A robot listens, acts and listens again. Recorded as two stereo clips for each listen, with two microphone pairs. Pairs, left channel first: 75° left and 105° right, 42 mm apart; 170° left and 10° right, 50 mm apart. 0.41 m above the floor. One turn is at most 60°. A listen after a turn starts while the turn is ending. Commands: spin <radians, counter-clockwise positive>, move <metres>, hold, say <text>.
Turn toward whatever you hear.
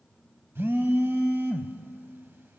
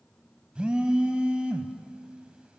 spin -1.05
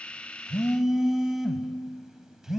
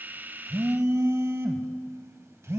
spin -0.44
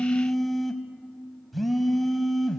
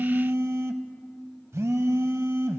spin -0.17
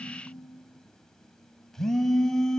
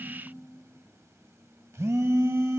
say Found it: a phone buzzing, straight ahead, under 1 m away.